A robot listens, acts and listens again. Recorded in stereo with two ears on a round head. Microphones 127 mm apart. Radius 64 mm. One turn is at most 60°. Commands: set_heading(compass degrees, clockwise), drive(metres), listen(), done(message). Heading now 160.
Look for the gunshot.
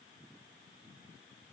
listen()
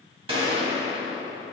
set_heading(200)
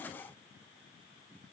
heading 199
listen()
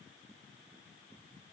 done("I heard a gunshot, but can't make it out now. It was about straight ahead or 100° right.")